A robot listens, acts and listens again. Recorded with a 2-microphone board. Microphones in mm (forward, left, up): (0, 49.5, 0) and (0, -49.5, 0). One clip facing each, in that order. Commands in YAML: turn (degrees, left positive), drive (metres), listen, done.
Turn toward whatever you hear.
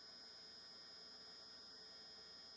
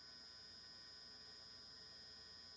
listen: true
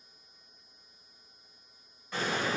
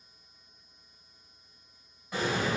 turn: -30
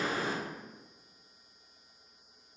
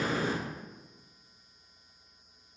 turn: 20
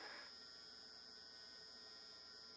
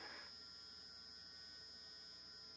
done: "Facing where the explosion came from. I can't hear it now."